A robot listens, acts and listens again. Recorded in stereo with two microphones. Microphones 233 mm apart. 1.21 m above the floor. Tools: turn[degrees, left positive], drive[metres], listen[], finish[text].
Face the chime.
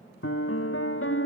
Action: listen[]
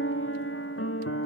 Action: listen[]
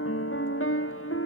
Action: finish[I can't make out a chime to turn to.]